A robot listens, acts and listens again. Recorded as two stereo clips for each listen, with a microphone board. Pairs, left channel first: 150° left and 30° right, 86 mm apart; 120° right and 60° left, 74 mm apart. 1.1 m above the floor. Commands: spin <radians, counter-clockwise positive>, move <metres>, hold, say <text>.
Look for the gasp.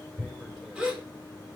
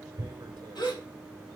spin -1.83
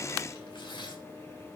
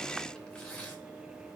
say I heard a gasp from this way, but can't make it out now.